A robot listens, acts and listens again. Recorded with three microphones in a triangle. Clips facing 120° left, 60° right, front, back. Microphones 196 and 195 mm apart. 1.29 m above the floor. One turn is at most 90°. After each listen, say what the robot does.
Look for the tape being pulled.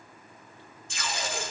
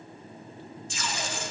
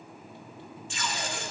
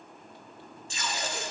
Turn 90° left.
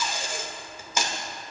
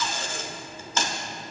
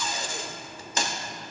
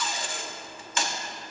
Turn 45° left.
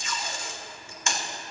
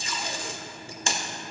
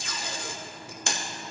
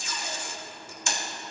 Found it: tape being pulled, straight ahead.